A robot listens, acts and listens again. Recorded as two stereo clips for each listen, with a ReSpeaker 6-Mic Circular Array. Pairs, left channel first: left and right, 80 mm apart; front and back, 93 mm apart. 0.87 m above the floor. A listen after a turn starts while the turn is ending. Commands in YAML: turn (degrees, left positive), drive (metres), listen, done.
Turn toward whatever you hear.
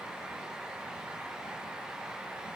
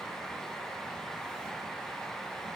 listen: true
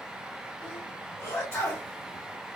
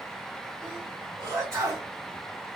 turn: 135
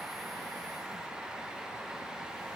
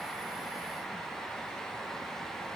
done: "Facing where the sneeze came from. I can't hear it now."